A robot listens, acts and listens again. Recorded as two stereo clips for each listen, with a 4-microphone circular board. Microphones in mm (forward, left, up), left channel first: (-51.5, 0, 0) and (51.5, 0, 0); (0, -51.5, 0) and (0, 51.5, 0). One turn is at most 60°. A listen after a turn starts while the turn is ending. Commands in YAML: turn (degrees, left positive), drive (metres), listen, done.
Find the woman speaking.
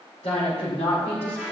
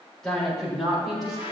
turn: 60
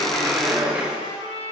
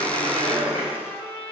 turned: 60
turn: 60
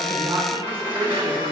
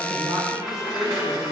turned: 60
turn: 50
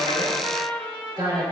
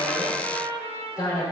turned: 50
turn: -30
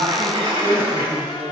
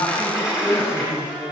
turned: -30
done: "Facing the woman speaking."